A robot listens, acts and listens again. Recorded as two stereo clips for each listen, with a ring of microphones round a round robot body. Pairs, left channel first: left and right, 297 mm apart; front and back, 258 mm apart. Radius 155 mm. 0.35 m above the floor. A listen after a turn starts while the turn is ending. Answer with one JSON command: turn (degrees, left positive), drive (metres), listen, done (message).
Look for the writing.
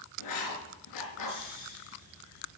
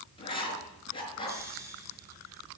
{"turn": 70}
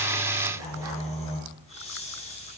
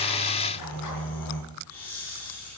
{"listen": true}
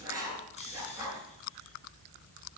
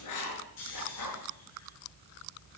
{"turn": -10}
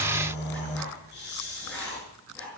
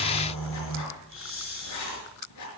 {"done": "Facing the writing, over 4 m away."}